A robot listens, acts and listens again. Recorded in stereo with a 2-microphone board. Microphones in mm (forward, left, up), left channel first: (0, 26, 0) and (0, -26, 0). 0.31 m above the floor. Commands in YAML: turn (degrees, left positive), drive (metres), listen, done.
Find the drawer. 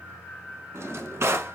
turn: -55
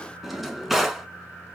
done: "Facing the drawer."